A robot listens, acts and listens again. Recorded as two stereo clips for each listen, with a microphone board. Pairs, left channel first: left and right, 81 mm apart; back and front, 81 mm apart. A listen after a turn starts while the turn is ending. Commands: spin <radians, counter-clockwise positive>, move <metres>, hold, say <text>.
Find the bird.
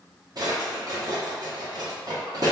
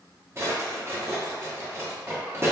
hold
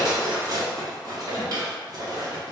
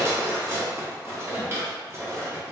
hold
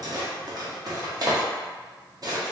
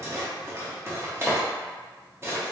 say I can't make out a bird, only a drawer.